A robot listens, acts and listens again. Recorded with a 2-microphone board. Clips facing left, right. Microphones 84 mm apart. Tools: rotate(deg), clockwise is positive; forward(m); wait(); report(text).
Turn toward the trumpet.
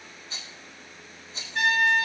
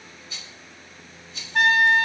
rotate(60)
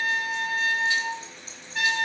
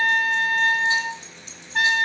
rotate(55)
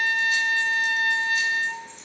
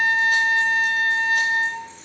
rotate(30)
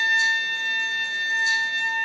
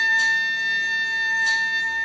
rotate(20)
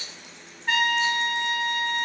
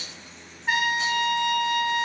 rotate(10)
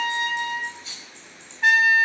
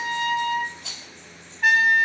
report("Facing the trumpet.")